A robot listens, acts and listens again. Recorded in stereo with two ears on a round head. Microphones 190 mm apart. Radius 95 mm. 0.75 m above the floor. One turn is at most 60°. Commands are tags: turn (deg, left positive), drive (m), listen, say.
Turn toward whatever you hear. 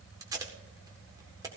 <turn deg="-15"/>
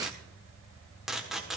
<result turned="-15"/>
<say>Facing the tape being pulled, 1 to 2 m away.</say>